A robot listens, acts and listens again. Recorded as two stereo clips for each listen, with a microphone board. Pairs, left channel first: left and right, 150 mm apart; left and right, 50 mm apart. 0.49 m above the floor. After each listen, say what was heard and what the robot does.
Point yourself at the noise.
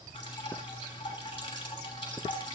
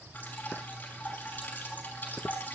The dripping: about 30° left or 150° left. Turn 30° left.
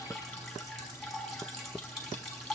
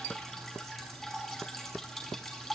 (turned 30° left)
Found it: dripping, straight ahead.